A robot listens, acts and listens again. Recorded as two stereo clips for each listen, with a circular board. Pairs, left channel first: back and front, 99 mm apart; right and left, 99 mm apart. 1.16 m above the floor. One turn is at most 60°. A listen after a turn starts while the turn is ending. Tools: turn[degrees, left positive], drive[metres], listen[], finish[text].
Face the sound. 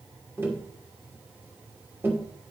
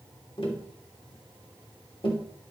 Thought: The tapping: 65° right.
Action: turn[-60]
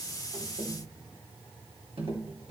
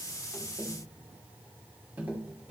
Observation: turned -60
Thought: The tapping is now 15° left.
Action: turn[15]
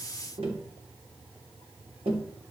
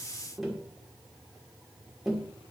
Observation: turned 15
Action: finish[Found it: tapping, straight ahead.]